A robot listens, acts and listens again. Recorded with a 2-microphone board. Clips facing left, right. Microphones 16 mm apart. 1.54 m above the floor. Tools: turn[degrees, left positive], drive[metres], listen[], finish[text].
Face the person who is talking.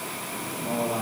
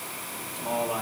Thought: The man speaking: about 65° right or 115° right.
Action: turn[-65]
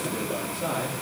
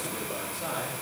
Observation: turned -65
Action: finish[Found it: a man speaking, straight ahead.]